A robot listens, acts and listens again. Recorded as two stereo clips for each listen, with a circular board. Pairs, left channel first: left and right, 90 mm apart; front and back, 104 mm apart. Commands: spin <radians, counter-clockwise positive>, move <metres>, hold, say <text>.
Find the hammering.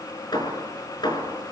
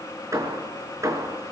spin 2.09
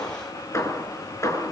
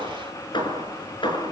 spin 0.61
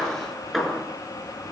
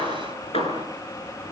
say Facing the hammering, over 4 m away.